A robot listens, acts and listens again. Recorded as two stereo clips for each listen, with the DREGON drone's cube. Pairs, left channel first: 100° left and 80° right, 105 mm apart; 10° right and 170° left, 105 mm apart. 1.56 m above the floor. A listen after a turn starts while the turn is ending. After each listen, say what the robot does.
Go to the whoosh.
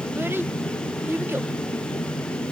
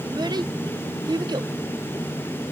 Keep listening.
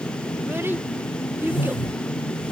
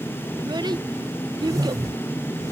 Turn 120° left.
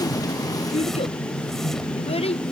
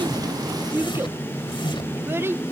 Turn 15° left.
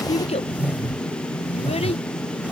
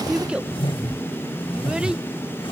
Drive 1.0 m forward.
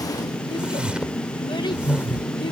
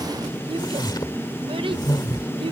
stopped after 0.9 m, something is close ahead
I am next to the whoosh.